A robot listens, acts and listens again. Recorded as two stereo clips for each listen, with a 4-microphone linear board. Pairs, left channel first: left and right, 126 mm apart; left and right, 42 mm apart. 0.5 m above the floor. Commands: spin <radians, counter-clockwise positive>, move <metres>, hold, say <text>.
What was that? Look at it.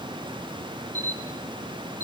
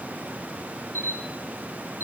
spin 1.31
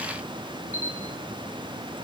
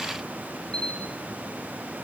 spin 0.52
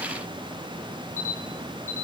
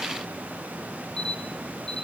spin 0.35
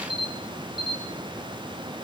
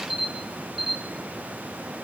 say Found it: a camera shutter, straight ahead, over 4 m away.